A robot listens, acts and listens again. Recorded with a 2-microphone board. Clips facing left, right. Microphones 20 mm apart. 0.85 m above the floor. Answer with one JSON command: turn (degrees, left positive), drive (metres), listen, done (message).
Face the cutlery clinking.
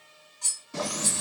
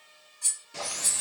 {"turn": 30}
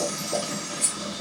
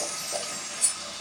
{"done": "Found it: cutlery clinking, straight ahead."}